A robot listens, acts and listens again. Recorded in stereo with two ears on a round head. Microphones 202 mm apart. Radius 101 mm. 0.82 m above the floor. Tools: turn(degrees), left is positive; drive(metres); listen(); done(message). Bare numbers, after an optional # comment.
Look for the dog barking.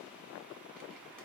listen()
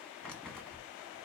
listen()
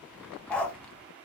turn(30)
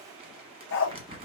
# So it is at 120° left.
turn(120)
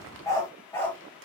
# The dog barking is now 10° left.
turn(10)
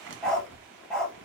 done("Found it: a dog barking, straight ahead, 1 to 2 m away.")